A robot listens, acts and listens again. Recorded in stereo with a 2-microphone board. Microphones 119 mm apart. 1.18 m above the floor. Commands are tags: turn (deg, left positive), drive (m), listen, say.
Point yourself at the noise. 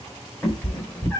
<turn deg="30"/>
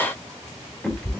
<turn deg="30"/>
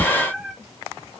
<say>Facing the cat meowing, 1 to 2 m away.</say>